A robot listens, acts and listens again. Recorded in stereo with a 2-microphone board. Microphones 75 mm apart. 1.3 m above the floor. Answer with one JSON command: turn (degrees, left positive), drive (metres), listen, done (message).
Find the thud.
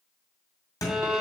{"turn": 55}
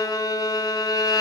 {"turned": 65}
{"listen": true}
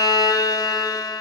{"done": "I heard a thud, but can't make it out now. It was about 10° right or 60° left."}